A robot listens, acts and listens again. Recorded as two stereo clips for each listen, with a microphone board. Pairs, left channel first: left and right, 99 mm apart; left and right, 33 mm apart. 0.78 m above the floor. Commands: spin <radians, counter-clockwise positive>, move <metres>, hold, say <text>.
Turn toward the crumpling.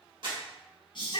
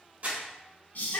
spin -0.96
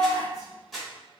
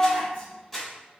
say Facing the crumpling, 1 to 2 m away.